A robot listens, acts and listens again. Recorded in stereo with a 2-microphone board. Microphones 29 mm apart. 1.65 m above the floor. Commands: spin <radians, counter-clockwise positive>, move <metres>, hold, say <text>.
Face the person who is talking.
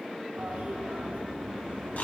hold
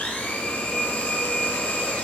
hold
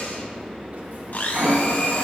say I can't make out anyone speaking to turn to.